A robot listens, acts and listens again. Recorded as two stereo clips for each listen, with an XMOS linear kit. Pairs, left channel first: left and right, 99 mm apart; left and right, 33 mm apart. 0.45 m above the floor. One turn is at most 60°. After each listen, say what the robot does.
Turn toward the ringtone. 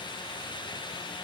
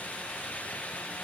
Keep listening.
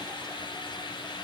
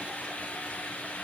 Keep listening.
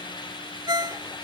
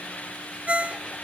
Turn 45° right.
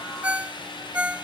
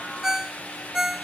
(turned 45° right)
Turn 15° right.
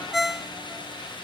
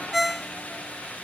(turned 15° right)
Facing the ringtone.